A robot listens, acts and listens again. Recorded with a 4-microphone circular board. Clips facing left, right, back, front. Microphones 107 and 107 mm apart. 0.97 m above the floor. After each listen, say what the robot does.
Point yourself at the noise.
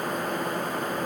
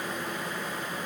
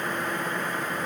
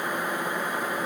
Keep listening.
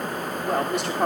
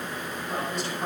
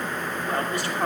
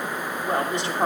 Turn 65° left.
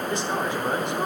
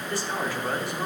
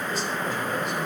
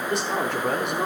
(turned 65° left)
Turn 20° left.
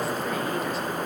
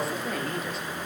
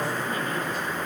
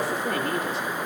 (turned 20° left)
Keep listening.
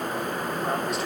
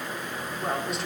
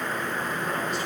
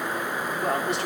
Keep listening.
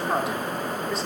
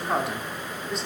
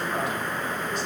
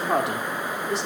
Facing the man speaking, 2 to 4 m away.